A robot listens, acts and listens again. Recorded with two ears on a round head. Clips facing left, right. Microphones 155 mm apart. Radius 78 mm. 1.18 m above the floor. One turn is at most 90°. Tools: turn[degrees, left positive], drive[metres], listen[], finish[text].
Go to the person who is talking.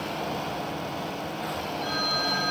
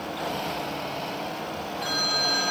Action: listen[]
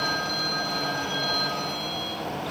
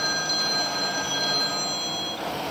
Action: listen[]
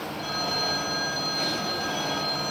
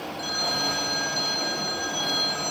Action: finish[I can't make out anyone speaking to turn to.]